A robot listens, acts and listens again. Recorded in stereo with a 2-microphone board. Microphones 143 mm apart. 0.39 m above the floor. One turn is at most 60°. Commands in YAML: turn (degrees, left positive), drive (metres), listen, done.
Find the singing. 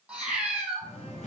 turn: 60
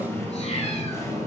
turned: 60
turn: 25
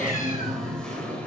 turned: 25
turn: 10
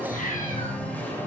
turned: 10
turn: 15
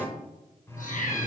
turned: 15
turn: 20
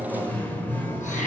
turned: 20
turn: 15
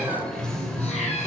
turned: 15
done: "Found it: singing, straight ahead, 1 to 2 m away."